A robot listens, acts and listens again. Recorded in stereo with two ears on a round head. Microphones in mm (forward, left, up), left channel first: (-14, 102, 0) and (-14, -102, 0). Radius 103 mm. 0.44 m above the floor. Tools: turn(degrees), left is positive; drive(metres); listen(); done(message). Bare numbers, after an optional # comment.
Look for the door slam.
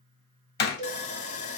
# The door slam: about 50° left or 130° left.
turn(50)
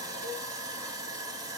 listen()
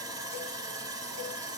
done("I heard a door slam, but can't make it out now. It was about straight ahead or 80° left.")